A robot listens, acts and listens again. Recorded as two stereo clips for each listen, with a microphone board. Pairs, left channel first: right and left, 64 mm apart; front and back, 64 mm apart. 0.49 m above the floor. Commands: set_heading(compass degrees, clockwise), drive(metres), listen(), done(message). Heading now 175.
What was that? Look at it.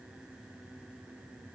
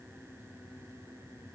listen()
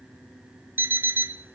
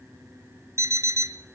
set_heading(30)
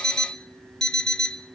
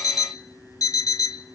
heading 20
set_heading(30)
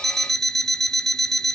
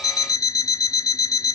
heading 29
done("Found it: an alarm clock, straight ahead, under 1 m away.")